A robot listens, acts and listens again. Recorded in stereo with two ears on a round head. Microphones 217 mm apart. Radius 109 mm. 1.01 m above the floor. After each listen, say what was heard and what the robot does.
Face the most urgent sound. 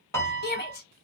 The shout: about 40° left or 140° left. Turn 40° left.
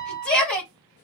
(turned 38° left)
Facing the shout.